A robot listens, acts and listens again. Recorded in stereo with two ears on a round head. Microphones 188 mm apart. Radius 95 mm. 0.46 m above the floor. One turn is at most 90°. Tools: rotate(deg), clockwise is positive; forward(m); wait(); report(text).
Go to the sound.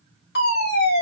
rotate(-50)
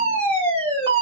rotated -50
rotate(-10)
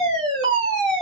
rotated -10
forward(1.0)
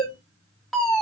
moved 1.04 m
forward(1.0)
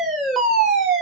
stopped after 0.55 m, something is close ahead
report("I am next to the fire alarm.")